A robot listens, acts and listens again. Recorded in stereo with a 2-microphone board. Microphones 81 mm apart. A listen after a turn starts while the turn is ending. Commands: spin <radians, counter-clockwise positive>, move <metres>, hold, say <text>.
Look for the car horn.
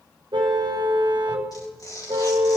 spin -1.05
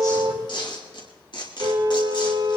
spin -0.87
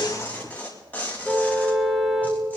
say Facing the car horn.